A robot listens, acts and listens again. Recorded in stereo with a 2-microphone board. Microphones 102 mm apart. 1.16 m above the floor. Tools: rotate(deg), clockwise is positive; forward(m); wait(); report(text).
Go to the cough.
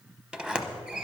wait()
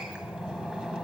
wait()
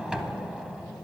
report("I can't make out a cough, only a sliding door.")